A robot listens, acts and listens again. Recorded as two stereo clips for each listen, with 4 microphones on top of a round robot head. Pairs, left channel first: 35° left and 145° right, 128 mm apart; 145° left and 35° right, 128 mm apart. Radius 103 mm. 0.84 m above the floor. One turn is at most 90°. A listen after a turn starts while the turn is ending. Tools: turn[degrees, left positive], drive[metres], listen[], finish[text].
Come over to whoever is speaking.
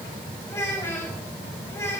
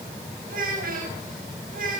Thought: The child speaking: 35° right.
Action: turn[-35]
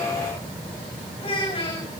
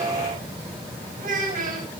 Thought: The child speaking is now 15° right.
Action: turn[-15]
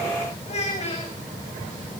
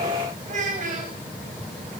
Action: drive[1.0]
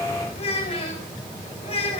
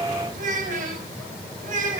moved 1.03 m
Thought: The child speaking is now 10° right.
Action: turn[-10]
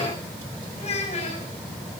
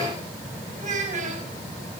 Action: drive[1.0]
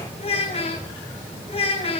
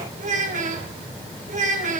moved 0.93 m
Thought: The child speaking is now 10° right.
Action: turn[-10]
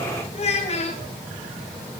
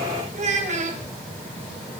Action: drive[1.0]
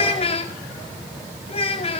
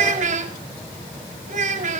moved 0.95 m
Thought: The child speaking is now 10° right.
Action: turn[-10]
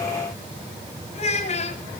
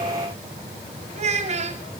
Action: drive[1.0]
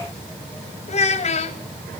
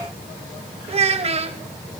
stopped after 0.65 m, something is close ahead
Action: finish[Arrived at the child speaking, straight ahead.]